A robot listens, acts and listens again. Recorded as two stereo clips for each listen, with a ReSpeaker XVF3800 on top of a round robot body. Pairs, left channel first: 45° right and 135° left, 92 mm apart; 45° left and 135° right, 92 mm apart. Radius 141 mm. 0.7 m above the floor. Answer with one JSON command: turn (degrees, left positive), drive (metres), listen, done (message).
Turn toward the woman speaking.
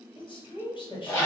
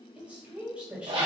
{"turn": -60}
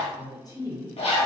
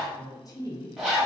{"done": "Facing the woman speaking, 1 to 2 m away."}